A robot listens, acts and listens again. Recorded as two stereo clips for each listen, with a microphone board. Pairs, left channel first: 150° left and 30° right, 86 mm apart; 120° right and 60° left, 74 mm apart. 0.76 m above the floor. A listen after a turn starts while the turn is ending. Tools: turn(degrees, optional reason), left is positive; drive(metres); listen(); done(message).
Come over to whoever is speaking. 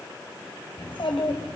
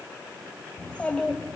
turn(degrees=165, reason="The child speaking: 165° left.")
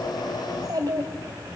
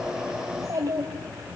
turn(degrees=15, reason="The child speaking is now 15° left.")
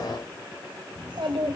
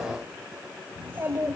drive(metres=1.0)
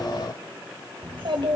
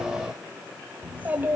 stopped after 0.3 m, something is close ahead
done("Something is in my way. I am facing the child speaking but have not reached it.")